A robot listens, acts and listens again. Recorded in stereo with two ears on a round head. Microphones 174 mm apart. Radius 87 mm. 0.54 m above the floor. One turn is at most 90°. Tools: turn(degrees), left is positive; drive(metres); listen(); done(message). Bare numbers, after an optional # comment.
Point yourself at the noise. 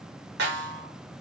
# The snare drum: about 60° right or 120° right.
turn(-60)
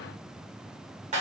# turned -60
# So it is at 40° right.
turn(-40)
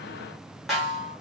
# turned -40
done("Found it: a snare drum, straight ahead.")